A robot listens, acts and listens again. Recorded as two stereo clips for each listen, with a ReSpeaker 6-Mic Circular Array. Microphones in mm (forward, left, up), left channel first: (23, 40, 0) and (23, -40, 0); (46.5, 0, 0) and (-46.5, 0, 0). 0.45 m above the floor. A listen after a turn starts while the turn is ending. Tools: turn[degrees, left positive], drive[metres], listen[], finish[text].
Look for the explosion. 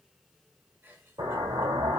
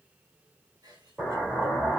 Thought: The explosion: 100° right.
Action: turn[-100]
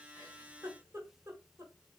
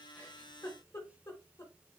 Action: finish[Facing where the explosion came from. I can't hear it now.]